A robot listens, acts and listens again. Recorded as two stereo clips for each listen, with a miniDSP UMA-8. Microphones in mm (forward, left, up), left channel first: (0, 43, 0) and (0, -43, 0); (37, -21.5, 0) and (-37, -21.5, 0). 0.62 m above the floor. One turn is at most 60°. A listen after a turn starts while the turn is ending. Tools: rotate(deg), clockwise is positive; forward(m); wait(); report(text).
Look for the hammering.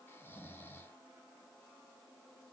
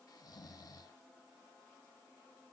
wait()
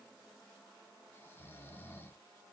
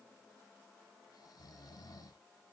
wait()
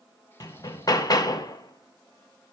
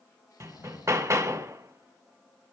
rotate(-60)
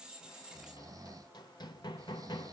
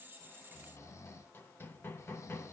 rotate(-60)
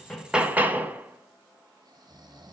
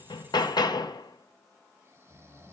rotate(20)
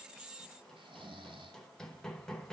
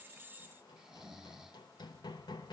report("Facing the hammering.")